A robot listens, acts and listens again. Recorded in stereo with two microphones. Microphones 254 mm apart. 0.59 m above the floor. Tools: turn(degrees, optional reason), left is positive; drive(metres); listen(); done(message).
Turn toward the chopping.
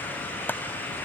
turn(degrees=30)
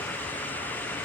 listen()
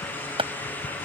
turn(degrees=-20, reason="So it is at 20° right.")
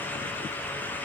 listen()
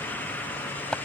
done("Found it: chopping, straight ahead.")